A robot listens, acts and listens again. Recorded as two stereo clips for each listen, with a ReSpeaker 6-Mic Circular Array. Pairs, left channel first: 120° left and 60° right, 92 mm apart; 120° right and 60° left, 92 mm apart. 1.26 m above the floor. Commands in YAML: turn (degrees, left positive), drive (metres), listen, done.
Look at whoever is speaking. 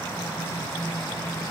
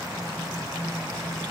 listen: true
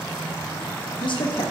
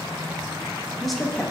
turn: 150
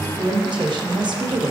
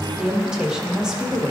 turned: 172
turn: -25
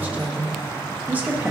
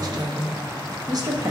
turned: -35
turn: 10
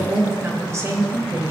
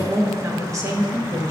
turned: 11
done: "Facing the woman speaking."